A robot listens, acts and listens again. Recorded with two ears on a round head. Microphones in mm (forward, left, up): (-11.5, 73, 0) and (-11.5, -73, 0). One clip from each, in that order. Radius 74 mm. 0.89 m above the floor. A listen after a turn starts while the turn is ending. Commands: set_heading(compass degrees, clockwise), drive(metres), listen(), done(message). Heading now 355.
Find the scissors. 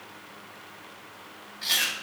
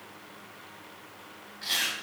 listen()
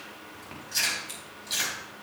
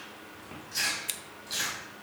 set_heading(65)
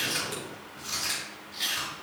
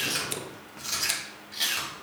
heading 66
listen()
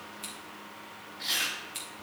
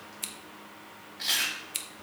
set_heading(106)
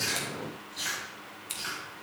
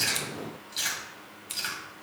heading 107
done("Found it: scissors, straight ahead, under 1 m away.")